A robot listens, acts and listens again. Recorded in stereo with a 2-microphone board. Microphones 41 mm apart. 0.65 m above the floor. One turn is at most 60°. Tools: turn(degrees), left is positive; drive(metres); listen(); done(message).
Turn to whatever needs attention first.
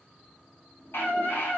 turn(degrees=60)
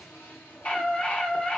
turn(degrees=35)
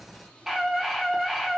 turn(degrees=-10)
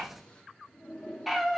done("Found it: a scream, straight ahead, 1 to 2 m away.")